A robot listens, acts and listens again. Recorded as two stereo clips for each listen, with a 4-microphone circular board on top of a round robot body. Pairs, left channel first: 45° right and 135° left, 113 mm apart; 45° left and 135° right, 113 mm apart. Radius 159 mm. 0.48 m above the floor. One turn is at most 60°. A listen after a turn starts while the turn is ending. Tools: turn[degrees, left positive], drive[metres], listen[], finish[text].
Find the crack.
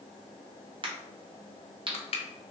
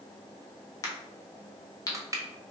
Thought: The crack: 100° left.
Action: turn[60]
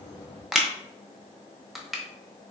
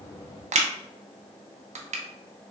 Thought: Nothing new. It was at 40° left.
Action: turn[40]
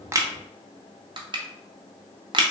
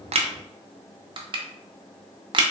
Action: finish[I heard a crack from this way, but can't make it out now.]